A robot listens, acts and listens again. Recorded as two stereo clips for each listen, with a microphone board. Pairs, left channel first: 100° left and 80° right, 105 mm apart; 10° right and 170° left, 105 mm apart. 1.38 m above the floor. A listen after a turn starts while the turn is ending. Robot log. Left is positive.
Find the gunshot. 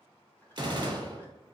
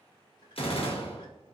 note: The gunshot: 35° right.
cmd yaw -35
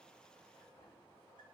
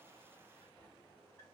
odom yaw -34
end: Facing where the gunshot came from. I can't hear it now.